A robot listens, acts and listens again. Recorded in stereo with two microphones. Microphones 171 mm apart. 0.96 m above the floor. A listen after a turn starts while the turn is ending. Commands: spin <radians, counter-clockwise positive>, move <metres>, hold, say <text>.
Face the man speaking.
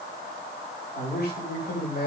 spin 1.57
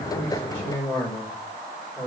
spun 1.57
spin 0.17
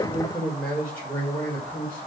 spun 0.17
spin 0.17
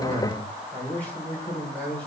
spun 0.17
say Found it: a man speaking, straight ahead.